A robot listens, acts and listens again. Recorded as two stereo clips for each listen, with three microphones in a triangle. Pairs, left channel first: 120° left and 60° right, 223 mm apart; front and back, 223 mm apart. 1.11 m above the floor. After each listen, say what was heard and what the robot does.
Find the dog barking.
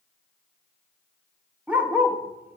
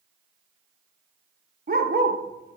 The dog barking: 145° right. Turn 145° right.
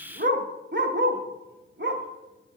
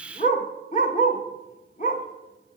The dog barking is now 45° right. Turn 45° right.
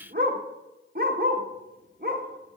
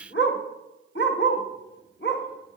The dog barking is now 20° right. Turn 20° right.
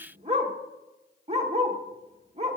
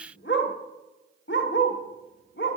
Facing the dog barking, 1 to 2 m away.